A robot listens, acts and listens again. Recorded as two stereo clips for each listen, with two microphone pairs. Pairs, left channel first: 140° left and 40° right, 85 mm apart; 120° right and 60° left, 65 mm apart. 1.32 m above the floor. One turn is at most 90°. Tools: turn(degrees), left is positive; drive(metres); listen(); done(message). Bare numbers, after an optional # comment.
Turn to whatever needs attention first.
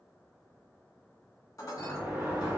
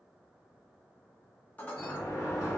listen()
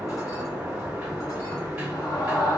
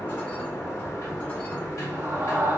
# The scream: 110° left.
turn(90)
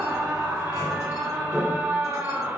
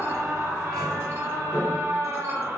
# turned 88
# The scream is now 20° left.
turn(20)
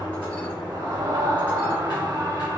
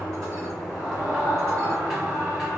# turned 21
done("Facing the scream.")